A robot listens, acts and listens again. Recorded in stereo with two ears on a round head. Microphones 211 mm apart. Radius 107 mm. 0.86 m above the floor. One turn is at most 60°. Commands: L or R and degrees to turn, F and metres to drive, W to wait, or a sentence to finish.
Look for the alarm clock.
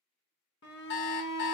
L50
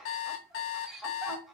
L60
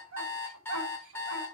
L10
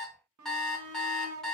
Facing the alarm clock, under 1 m away.